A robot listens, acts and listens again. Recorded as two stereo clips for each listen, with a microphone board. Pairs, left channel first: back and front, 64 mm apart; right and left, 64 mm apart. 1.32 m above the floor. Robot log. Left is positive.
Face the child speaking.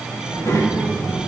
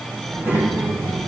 note: The child speaking: 140° left.
cmd yaw +140
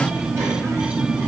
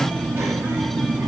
note: The child speaking is now 30° left.
cmd yaw +30
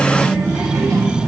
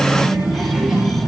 end: Facing the child speaking, over 4 m away.